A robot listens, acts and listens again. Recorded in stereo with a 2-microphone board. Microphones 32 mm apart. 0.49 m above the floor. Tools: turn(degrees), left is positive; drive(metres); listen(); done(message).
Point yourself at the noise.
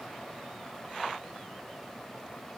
listen()
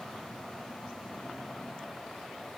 listen()
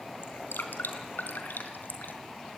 turn(degrees=90)
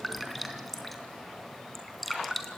done("Facing the dripping, 2 to 4 m away.")